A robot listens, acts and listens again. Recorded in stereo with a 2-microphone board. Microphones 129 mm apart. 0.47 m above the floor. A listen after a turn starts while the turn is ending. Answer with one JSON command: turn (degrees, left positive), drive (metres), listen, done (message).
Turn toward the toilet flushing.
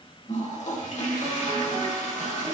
{"turn": 60}
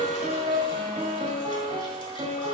{"listen": true}
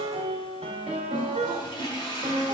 {"turn": 45}
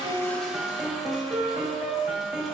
{"listen": true}
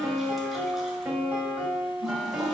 {"listen": true}
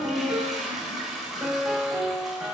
{"done": "Found it: a toilet flushing, straight ahead, 1 to 2 m away."}